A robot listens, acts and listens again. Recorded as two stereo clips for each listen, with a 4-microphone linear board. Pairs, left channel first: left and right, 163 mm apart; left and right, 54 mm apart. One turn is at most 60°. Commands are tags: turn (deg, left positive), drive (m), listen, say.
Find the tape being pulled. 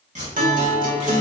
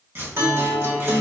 <turn deg="-45"/>
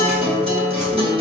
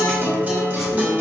<listen/>
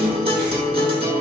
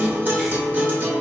<listen/>
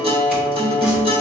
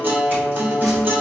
<say>I heard tape being pulled, but can't make it out now. It was about straight ahead or 90° right.</say>